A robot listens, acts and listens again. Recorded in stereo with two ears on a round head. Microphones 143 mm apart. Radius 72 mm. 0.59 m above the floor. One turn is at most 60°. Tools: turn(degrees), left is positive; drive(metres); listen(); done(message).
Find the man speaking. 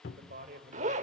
turn(degrees=-55)
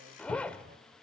listen()
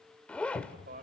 turn(degrees=-60)
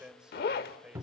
done("Found it: a man speaking, straight ahead, 2 to 4 m away.")